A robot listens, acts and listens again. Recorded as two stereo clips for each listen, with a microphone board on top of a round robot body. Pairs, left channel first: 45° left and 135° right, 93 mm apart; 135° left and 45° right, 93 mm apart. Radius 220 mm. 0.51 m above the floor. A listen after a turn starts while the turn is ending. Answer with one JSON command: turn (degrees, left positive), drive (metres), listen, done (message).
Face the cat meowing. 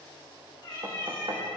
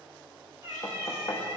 {"turn": 10}
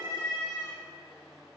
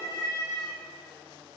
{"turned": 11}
{"done": "Facing the cat meowing, 1 to 2 m away."}